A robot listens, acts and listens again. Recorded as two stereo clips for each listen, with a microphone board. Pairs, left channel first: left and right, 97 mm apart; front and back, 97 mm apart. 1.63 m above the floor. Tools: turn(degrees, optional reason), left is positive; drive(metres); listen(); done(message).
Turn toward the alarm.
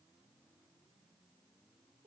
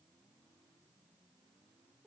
listen()
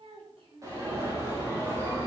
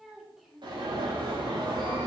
turn(degrees=-145, reason="The alarm: 145° right.")
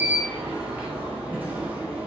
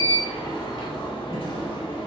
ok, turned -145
turn(degrees=-20, reason="The alarm is now 20° right.")
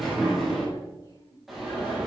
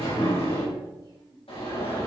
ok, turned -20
done("Facing the alarm, over 4 m away.")